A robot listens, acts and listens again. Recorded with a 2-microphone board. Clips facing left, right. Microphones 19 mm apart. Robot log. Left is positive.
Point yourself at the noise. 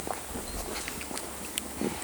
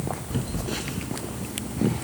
note: The phone buzzing: about 70° right or 110° right.
cmd yaw -70
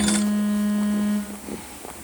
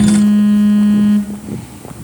note: So it is at 40° right.
cmd yaw -40
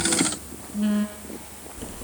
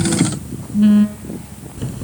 note: The phone buzzing is now 20° right.
cmd yaw -20
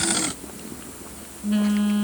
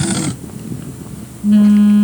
end: Facing the phone buzzing, 2 to 4 m away.